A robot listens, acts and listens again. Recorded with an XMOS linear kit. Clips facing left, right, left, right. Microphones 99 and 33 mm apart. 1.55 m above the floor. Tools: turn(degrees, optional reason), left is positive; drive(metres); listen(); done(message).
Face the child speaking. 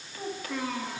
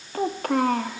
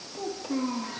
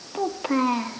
turn(degrees=-55, reason="The child speaking: about 55° right or 125° right.")
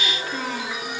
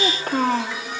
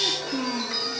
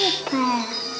turn(degrees=-50, reason="So it is at 50° right.")
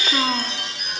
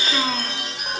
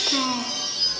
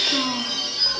turn(degrees=10, reason="The child speaking is now 10° left.")
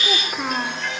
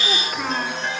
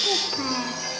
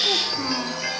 turn(degrees=10, reason="The child speaking is now 10° left.")
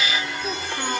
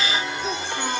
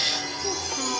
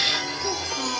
done("Found it: a child speaking, straight ahead.")